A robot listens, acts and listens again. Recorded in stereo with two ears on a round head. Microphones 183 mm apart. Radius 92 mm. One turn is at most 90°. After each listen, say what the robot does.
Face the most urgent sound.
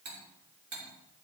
Keep listening.
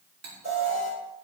Turn 35° right.
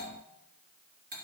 Keep listening.
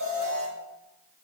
Turn 90° right.
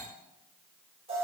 Turn 30° right.
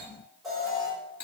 Found it: an alarm, straight ahead, over 4 m away.